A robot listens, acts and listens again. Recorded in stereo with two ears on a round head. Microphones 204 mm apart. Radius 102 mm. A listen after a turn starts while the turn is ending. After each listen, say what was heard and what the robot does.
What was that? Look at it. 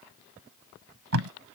The tape being pulled: about 70° right or 110° right. Turn 70° right.
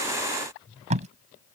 So it is at 30° right. Turn 30° right.
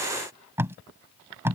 The tape being pulled is now 10° right. Turn 10° right.
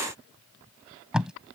Found it: tape being pulled, straight ahead.